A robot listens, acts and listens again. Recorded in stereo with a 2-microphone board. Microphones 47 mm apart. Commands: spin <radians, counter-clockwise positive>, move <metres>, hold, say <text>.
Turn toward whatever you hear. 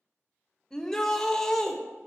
spin 0.52
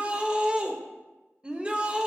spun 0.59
spin -0.44
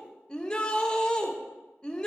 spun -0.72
spin 0.26
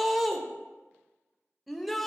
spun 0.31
say Found it: a shout, straight ahead, under 1 m away.